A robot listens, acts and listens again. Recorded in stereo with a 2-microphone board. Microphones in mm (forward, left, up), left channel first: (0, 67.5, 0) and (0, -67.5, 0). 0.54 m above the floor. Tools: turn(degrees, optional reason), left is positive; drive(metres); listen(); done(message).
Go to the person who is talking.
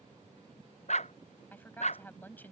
turn(degrees=30)
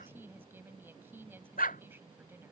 turn(degrees=-15, reason="So it is at 15° right.")
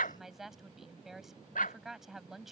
drive(metres=1.0)
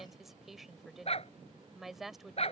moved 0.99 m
drive(metres=1.0)
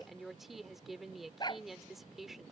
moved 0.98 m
drive(metres=1.0)
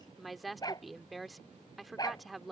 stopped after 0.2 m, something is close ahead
done("Arrived at the woman speaking, straight ahead.")